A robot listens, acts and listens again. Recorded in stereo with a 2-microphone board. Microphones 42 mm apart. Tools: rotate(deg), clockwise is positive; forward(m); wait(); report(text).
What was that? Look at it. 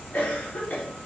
rotate(-45)
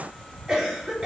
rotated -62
rotate(20)
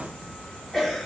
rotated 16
report("Facing the cough, 2 to 4 m away.")